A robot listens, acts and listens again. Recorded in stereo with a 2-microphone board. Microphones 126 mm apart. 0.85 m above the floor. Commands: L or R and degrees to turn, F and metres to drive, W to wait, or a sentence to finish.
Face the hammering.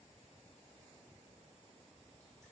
W
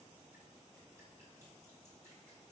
W
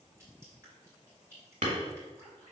R90
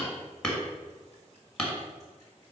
Facing the hammering, 1 to 2 m away.